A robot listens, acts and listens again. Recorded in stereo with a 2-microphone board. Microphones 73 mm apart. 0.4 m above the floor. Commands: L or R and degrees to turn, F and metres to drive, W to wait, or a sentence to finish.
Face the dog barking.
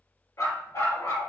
L50
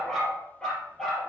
L10
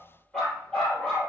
Found it: a dog barking, straight ahead.